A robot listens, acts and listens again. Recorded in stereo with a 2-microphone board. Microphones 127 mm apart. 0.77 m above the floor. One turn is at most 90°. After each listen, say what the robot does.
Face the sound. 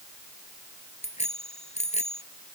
Turn 60° left.
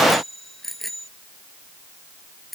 Facing the bicycle bell.